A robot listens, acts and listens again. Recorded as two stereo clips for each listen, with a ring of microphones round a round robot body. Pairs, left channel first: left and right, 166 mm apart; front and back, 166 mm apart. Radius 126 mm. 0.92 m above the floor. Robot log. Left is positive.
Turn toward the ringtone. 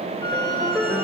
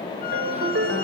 note: The ringtone: 175° left.
cmd yaw +175
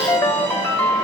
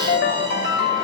note: The ringtone is now 10° left.
cmd yaw +10
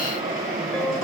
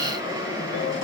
cmd idle
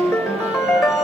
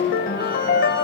end: Facing the ringtone.